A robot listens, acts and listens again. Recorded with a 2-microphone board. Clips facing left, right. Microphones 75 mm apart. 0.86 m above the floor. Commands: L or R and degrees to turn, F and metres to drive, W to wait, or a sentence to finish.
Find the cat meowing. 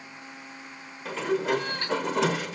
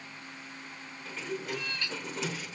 L45
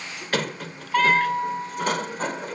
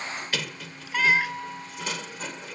W
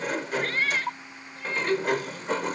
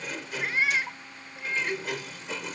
R15
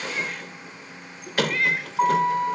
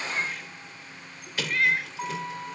Facing the cat meowing.